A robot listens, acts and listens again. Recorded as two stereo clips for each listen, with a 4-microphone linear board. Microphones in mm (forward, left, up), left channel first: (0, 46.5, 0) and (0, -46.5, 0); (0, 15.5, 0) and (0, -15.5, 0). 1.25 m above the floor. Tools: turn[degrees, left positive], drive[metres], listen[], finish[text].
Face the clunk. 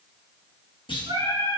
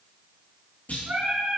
Thought: The clunk: about 70° left or 110° left.
Action: turn[70]
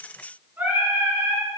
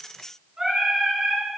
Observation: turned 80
Action: listen[]
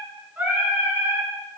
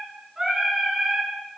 Action: finish[I heard a clunk, but can't make it out now. It was about 10° right or 30° left.]